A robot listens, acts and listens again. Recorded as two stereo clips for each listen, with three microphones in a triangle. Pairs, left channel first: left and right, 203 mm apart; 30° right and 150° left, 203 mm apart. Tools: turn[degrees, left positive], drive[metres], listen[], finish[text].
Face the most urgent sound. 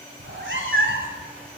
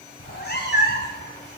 Action: listen[]
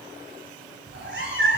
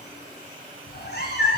Action: listen[]
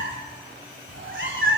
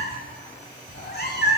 Action: finish[I can't make out anything urgent, only a cat meowing.]